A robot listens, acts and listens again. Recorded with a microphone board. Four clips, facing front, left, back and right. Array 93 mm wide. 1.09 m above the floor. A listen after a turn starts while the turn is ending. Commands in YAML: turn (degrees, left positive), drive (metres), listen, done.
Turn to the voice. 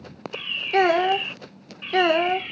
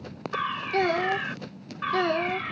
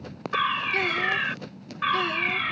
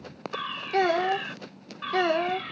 done: "Facing the child speaking."